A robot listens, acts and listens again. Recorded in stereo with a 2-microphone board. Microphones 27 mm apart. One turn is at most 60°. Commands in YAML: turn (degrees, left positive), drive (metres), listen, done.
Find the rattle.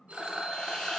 turn: -25
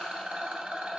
turn: -60
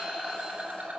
turn: -60
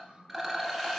done: "Facing the rattle, 1 to 2 m away."